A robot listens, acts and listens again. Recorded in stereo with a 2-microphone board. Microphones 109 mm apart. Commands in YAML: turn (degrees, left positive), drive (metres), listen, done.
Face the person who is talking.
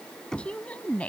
turn: 30
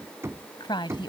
turn: 135
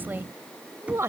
turn: -25
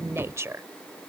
turn: -25
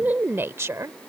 turn: -30
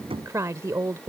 turn: -30
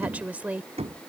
turn: -15
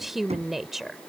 done: "Found it: a woman speaking, straight ahead."